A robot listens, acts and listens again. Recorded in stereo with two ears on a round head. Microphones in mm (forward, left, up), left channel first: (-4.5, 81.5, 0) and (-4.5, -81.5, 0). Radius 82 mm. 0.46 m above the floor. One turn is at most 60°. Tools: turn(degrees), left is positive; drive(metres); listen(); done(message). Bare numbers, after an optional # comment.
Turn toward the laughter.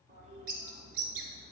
listen()
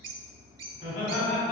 # The laughter: about 50° left or 130° left.
turn(50)
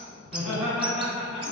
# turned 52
done("Found it: laughter, straight ahead.")